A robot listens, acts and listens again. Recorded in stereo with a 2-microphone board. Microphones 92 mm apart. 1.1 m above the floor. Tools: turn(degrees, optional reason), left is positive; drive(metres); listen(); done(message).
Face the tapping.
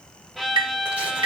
turn(degrees=-60, reason="The tapping: about 60° right or 120° right.")
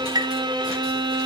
turn(degrees=-50, reason="So it is at 50° right.")
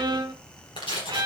listen()
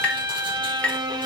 turn(degrees=15, reason="The tapping is now 15° left.")
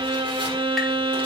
listen()
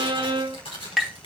done("Facing the tapping.")